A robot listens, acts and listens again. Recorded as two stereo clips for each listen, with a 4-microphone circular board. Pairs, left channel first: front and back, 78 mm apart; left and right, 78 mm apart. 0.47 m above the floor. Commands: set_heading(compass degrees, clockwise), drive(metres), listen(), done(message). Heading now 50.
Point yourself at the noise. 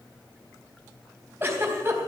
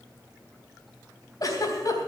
set_heading(290)
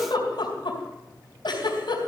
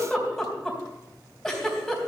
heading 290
done("Facing the giggle, 2 to 4 m away.")